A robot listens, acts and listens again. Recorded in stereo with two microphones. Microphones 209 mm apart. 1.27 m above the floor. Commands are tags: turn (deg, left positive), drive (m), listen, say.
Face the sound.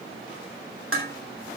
<turn deg="-90"/>
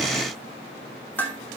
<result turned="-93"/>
<turn deg="10"/>
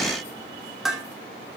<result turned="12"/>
<say>Found it: dishes clattering, straight ahead, 2 to 4 m away.</say>